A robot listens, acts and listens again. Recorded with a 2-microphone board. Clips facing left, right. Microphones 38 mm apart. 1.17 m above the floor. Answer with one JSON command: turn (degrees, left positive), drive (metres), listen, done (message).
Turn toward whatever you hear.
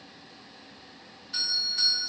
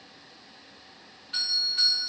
{"turn": -35}
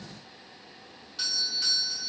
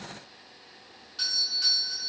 {"done": "Found it: a doorbell, straight ahead."}